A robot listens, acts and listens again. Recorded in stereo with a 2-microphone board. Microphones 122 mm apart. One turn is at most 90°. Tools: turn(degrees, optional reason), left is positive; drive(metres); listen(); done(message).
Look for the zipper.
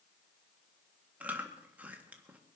listen()
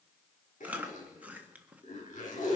turn(degrees=90)
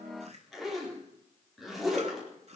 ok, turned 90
done("Facing the zipper.")